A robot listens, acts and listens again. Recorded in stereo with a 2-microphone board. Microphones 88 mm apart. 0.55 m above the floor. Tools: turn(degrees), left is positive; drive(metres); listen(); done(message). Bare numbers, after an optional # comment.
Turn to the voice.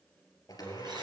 listen()
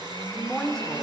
turn(30)
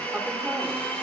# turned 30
listen()
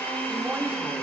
listen()
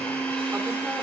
done("I heard a woman speaking, but can't make it out now. It was about 25° right or 145° left.")